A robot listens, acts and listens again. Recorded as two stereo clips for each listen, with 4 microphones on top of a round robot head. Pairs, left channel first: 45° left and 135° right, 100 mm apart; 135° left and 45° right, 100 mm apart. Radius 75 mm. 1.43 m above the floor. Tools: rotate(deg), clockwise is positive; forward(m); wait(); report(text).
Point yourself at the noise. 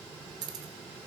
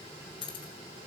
rotate(-175)
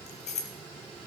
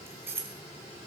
rotate(-25)
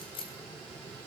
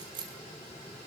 report("Found it: keys jangling, straight ahead, 1 to 2 m away.")